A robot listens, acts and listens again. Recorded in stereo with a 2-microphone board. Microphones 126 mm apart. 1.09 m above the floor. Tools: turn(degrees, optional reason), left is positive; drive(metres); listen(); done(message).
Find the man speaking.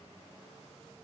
listen()
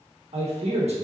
turn(degrees=-65, reason="The man speaking: about 65° right or 115° right.")
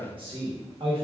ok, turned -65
turn(degrees=-50, reason="So it is at 50° right.")
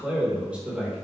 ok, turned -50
turn(degrees=-10, reason="The man speaking is now 10° right.")
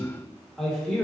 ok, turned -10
done("Facing the man speaking, 1 to 2 m away.")